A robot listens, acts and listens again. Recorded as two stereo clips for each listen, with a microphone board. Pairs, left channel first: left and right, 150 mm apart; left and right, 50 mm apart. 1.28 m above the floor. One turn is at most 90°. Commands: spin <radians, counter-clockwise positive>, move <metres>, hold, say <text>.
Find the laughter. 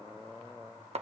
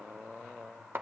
hold
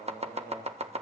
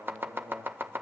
hold
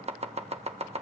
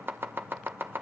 say I can't make out laughter to turn to.